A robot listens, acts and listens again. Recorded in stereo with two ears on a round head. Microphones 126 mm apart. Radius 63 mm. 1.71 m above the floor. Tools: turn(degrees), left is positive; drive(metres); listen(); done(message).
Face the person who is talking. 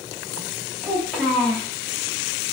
turn(degrees=30)
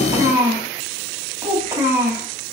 turn(degrees=-20)
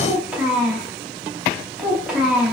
done("Facing the child speaking, 2 to 4 m away.")